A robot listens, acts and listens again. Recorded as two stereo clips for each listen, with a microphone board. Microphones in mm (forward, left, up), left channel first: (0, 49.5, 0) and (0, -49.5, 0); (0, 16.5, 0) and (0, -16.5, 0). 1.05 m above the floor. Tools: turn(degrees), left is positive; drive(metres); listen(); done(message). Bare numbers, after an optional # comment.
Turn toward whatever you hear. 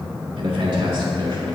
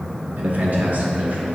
# The man speaking: about 45° right or 135° right.
turn(-45)
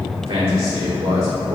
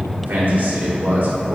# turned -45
# So it is at 80° right.
turn(-80)
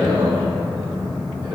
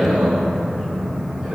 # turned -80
# The man speaking is now 45° right.
turn(-45)
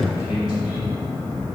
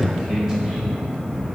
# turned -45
# The man speaking is now 10° right.
turn(-10)
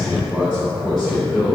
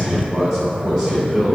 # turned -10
done("Found it: a man speaking, straight ahead, over 4 m away.")